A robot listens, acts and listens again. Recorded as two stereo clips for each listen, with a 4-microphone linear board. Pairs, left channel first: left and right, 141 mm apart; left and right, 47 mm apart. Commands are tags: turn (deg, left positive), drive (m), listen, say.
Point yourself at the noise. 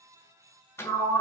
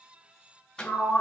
<turn deg="15"/>
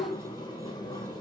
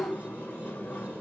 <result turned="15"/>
<turn deg="150"/>
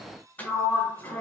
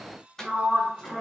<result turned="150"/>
<turn deg="10"/>
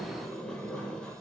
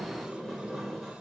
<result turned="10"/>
<say>Found it: a sliding door, straight ahead.</say>